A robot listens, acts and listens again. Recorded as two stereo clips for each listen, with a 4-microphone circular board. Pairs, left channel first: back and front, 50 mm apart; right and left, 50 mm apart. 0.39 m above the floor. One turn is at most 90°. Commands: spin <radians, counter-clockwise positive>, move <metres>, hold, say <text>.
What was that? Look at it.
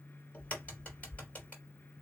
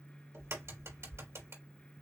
spin 1.57
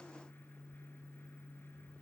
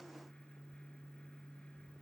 spin 0.44
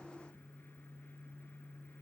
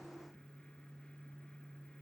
say Facing where the crack came from. I can't hear it now.